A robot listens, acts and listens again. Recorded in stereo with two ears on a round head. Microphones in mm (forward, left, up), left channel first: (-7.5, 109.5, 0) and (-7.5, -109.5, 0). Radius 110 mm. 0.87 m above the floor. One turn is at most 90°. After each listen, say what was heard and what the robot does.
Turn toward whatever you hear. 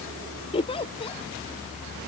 The giggle: about 25° left or 155° left. Turn 25° left.
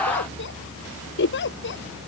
So it is at 130° left. Turn 90° left.
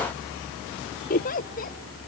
The giggle is now 35° left. Turn 35° left.
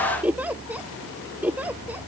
Found it: a giggle, straight ahead.